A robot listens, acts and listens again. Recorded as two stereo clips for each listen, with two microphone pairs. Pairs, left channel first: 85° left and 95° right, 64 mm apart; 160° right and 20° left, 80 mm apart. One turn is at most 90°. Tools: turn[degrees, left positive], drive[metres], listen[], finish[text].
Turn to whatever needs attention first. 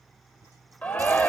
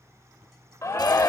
Thought: The shout: 150° left.
Action: turn[90]
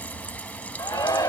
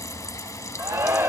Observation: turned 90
Thought: The shout is now 70° left.
Action: turn[70]
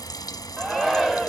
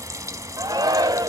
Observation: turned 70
Thought: The shout is now 15° right.
Action: turn[-15]
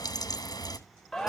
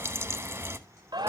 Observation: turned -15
Action: finish[Facing the shout.]